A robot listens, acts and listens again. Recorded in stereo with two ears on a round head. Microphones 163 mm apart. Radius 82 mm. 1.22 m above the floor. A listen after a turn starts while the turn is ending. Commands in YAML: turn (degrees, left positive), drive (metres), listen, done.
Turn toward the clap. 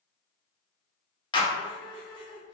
turn: 25
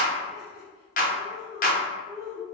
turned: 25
turn: 130
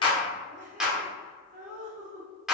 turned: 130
done: "Facing the clap."